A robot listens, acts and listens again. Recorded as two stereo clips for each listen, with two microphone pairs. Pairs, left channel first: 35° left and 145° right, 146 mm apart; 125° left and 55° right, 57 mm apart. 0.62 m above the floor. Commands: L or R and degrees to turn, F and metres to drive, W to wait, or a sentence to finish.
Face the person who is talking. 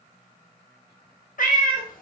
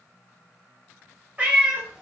W
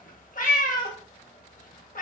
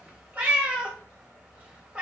W
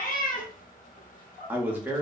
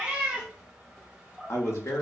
L140
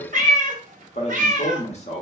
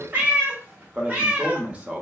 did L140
L10
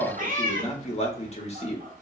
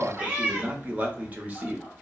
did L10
Facing the man speaking.